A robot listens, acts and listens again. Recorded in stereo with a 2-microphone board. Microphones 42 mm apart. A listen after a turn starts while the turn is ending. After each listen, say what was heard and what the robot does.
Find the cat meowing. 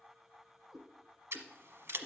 Turn 30° right.
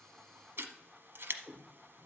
So it is at 10° left. Turn 10° left.
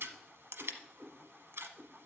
Facing the cat meowing.